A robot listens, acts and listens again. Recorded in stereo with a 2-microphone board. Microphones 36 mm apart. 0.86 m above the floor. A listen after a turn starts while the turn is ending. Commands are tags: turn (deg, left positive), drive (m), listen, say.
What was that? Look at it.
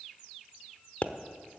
<turn deg="45"/>
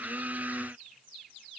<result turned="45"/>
<listen/>
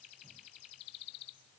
<say>I heard a pop, but can't make it out now. It was about straight ahead or 90° left.</say>